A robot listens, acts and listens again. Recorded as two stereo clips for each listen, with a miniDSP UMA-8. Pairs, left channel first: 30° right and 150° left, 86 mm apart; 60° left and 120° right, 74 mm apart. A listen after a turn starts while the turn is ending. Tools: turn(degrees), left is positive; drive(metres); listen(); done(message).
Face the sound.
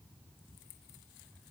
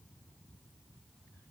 listen()
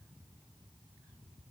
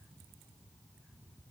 listen()
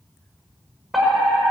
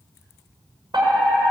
turn(degrees=-120)
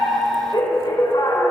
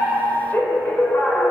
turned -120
done("Facing the fire alarm.")